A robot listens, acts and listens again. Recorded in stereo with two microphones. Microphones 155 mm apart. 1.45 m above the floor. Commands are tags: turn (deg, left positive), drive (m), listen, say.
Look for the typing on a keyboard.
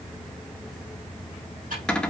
<turn deg="-60"/>
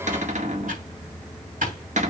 <turn deg="-60"/>
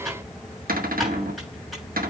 <say>Found it: typing on a keyboard, straight ahead.</say>